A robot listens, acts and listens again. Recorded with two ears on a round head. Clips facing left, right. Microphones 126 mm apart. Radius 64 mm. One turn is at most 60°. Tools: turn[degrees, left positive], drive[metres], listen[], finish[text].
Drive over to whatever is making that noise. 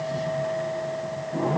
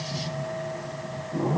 Action: listen[]
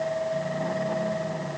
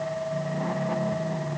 Action: listen[]
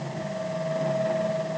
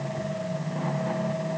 Action: finish[I can't make out anything to turn to.]